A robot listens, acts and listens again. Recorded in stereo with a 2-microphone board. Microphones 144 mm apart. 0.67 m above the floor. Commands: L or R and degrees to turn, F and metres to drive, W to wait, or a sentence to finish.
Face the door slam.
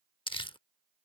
W
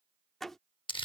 L30
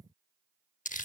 W
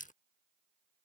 I heard a door slam, but can't make it out now. It was about 25° right or 145° left.